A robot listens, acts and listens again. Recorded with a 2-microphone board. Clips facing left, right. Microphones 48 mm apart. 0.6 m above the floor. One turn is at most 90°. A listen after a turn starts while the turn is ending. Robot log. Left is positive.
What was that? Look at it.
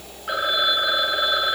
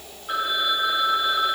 note: The phone ringing: about 70° left or 110° left.
cmd yaw +70
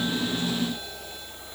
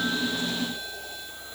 cmd idle
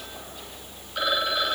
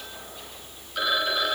end: Facing the phone ringing, 2 to 4 m away.